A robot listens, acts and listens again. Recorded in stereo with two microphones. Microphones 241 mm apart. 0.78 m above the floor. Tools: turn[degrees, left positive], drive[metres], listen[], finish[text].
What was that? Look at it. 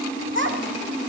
Thought: The child speaking: about 50° right or 130° right.
Action: turn[-50]
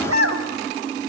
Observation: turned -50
Thought: So it is at 75° right.
Action: turn[-75]
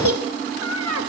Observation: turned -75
Thought: The child speaking is now 75° right.
Action: turn[-75]
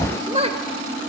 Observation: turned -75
Thought: The child speaking is now 25° right.
Action: turn[-25]
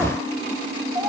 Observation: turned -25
Thought: The child speaking is now 15° right.
Action: turn[-15]
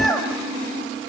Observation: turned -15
Action: finish[Facing the child speaking.]